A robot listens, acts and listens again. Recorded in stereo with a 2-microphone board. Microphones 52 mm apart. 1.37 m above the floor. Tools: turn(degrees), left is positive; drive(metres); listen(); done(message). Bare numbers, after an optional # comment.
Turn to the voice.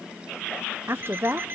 # The woman speaking: about 45° right or 135° right.
turn(-45)
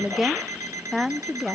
done("Found it: a woman speaking, straight ahead.")